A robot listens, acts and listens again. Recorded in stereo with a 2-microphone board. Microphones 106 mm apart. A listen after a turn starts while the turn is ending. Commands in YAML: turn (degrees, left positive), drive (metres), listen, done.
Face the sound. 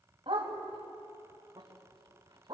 turn: -45
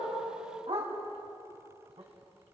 turn: -105
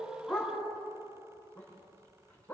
turn: 15
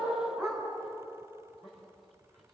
done: "Facing the dog barking."